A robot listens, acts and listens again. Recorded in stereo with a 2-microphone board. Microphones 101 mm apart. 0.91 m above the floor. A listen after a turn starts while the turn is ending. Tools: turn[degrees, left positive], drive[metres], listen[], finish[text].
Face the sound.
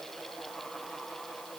Action: listen[]
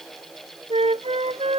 Action: turn[-90]
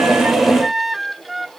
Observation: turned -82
Action: finish[Found it: a flute, straight ahead.]